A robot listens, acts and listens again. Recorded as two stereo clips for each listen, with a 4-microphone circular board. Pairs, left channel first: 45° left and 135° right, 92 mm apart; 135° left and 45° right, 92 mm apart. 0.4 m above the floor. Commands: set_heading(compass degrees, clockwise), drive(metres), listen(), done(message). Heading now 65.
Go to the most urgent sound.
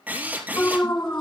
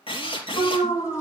set_heading(325)
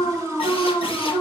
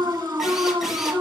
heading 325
set_heading(335)
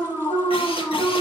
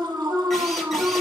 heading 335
drive(1.0)
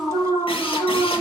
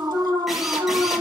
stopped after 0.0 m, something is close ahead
set_heading(345)
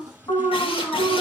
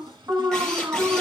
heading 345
done("Something is in my way. I am facing the alarm but have not reached it.")